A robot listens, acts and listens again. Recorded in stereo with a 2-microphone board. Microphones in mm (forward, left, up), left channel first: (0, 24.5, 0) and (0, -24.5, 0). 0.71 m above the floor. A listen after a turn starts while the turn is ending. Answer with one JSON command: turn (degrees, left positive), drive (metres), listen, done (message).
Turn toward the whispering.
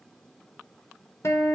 {"listen": true}
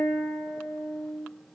{"listen": true}
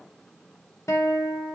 {"done": "I can't make out whispering to turn to."}